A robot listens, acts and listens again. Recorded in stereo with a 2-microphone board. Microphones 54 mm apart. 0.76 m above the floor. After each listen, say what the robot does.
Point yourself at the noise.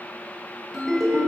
Turn 30° left.
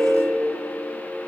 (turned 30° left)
Turn 145° left.
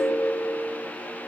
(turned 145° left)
Facing the ringtone.